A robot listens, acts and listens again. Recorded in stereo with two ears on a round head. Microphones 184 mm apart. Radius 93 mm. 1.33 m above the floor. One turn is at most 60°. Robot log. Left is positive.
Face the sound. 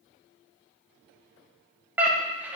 cmd yaw -30
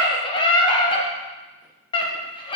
note: So it is at 25° left.
cmd yaw +25
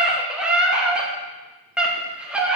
end: Found it: a scream, straight ahead.